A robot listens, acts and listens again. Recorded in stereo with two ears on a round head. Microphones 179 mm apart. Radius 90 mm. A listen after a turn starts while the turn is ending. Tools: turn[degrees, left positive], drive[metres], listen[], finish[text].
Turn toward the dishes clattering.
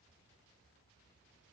Action: listen[]
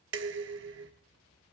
Thought: The dishes clattering: about 60° right or 120° right.
Action: turn[-60]
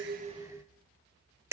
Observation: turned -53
Thought: So it is at 15° right.
Action: turn[-15]
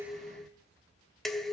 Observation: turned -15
Action: finish[Facing the dishes clattering, under 1 m away.]